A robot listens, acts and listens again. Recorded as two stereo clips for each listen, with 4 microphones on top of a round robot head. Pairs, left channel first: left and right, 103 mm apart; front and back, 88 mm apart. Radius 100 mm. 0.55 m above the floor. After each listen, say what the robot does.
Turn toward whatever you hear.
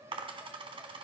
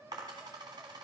Turn 125° right.
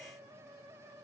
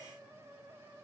I heard a dropped coin from this way, but can't make it out now.